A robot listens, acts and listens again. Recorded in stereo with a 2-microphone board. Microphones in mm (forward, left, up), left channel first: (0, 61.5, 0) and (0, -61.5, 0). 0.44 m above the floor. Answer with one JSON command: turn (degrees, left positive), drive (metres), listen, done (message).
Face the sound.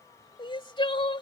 {"turn": 40}
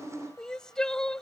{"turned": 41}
{"done": "Found it: crying, straight ahead."}